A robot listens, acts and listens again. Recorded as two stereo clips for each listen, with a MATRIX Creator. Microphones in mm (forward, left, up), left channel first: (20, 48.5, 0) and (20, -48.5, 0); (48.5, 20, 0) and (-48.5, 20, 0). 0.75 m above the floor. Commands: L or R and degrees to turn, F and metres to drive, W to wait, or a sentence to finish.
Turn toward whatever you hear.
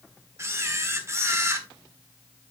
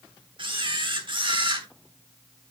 R150
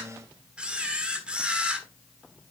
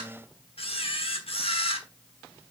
R10
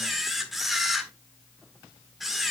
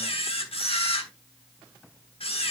Facing the camera shutter, 1 to 2 m away.